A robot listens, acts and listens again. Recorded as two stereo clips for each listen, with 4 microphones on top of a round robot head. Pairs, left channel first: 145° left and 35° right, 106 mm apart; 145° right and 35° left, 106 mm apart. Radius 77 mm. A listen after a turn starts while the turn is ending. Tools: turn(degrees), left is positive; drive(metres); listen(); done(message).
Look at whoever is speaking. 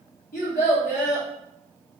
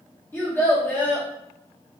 turn(degrees=145)
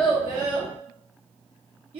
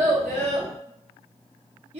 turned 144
done("Found it: a child speaking, straight ahead.")